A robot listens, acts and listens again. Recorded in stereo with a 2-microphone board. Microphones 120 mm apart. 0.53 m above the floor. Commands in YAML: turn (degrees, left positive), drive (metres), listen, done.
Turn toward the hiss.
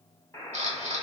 listen: true
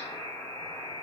listen: true
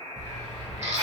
turn: -35
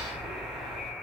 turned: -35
done: "Facing the hiss, 1 to 2 m away."